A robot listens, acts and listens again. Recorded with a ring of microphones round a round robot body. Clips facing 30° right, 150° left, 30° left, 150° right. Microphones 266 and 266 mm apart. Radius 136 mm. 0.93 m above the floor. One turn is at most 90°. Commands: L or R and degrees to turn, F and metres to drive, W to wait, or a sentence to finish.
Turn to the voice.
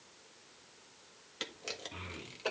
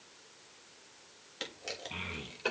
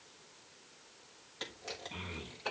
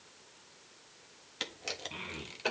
L90
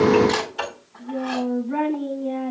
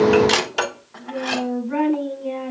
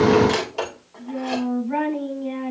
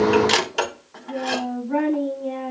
L75
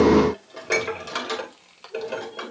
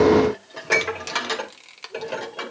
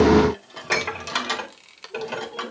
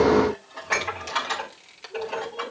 W
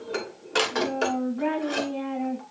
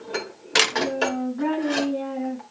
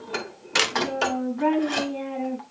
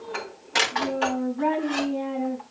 R15
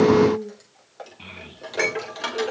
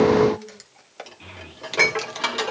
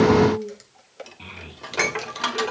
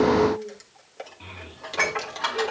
Facing the child speaking.